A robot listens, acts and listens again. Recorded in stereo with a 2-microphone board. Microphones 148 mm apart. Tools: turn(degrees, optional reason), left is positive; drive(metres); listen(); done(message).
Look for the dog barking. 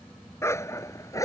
turn(degrees=20, reason="The dog barking: about 20° left or 160° left.")
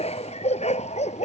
turn(degrees=130, reason="So it is at 130° left.")
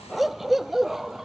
done("Facing the dog barking.")